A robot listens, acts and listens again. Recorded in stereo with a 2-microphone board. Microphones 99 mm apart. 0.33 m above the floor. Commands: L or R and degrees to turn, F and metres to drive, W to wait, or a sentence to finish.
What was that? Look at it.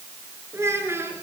R25
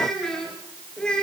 L10
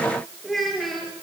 Found it: a child speaking, straight ahead, 2 to 4 m away.